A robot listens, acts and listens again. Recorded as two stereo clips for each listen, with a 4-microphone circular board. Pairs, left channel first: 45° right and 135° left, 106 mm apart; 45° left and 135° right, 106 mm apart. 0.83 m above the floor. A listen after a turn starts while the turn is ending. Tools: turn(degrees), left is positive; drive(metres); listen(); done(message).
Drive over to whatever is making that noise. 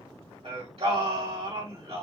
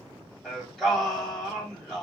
turn(degrees=135)
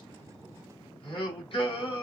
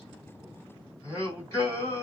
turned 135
turn(degrees=-10)
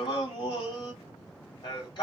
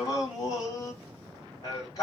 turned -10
drive(metres=1.0)
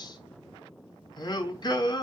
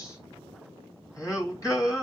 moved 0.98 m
drive(metres=1.0)
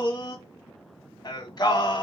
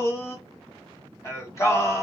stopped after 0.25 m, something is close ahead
turn(degrees=-10)
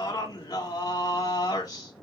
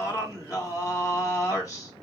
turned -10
done("Arrived at the singing, straight ahead.")